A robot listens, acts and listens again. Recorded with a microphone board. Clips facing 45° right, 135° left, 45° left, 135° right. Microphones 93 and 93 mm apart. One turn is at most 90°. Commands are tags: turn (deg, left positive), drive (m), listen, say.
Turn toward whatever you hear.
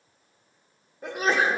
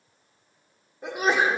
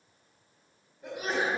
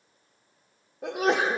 <turn deg="-90"/>
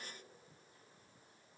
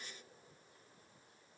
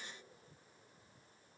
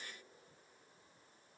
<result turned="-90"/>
<turn deg="-50"/>
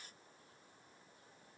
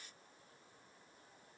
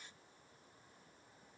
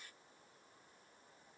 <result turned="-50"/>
<say>I heard a sneeze from this way, but can't make it out now.</say>